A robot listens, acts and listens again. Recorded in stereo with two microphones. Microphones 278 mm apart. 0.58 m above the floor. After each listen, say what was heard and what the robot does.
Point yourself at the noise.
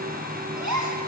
Turn 90° right.
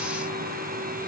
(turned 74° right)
Nothing new. It was at 15° right. Turn 15° right.
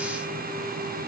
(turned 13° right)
Facing where the gasp came from. I can't hear it now.